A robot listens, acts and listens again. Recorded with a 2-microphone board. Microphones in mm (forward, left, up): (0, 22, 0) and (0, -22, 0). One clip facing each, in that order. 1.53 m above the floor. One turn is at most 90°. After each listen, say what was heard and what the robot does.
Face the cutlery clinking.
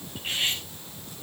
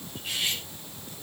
The cutlery clinking: about 40° left or 140° left. Turn 40° left.
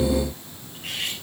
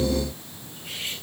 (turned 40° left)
So it is at 105° left. Turn 90° left.
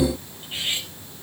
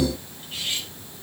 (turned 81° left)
The cutlery clinking is now 20° left. Turn 20° left.
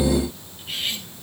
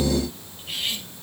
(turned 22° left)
Facing the cutlery clinking.